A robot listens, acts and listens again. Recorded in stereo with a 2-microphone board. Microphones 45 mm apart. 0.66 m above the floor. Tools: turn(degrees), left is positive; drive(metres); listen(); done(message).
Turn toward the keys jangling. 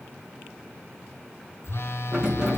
turn(degrees=-30)
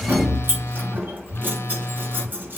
turn(degrees=-140)
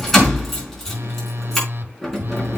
done("Facing the keys jangling, over 4 m away.")